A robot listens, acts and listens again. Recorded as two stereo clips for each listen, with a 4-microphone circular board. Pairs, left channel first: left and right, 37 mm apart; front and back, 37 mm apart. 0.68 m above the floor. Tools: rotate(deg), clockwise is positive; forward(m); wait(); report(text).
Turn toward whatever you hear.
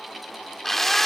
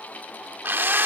rotate(-170)
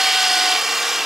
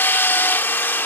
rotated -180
rotate(10)
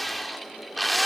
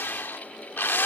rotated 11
report("Facing the drill.")